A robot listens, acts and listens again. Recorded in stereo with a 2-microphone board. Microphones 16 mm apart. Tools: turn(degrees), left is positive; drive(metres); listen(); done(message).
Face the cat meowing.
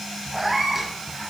turn(degrees=-30)
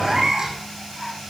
turn(degrees=-140)
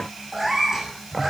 turn(degrees=-20)
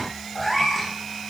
done("Facing the cat meowing.")